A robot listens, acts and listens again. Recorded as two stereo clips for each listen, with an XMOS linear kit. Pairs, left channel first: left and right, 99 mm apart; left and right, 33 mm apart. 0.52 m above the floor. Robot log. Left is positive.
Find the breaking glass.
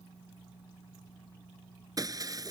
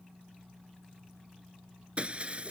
note: The breaking glass: about 40° right or 140° right.
cmd yaw -40
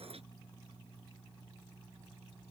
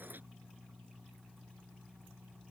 cmd idle
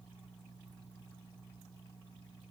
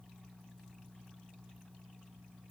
end: I heard breaking glass, but can't make it out now. It was about straight ahead or 100° right.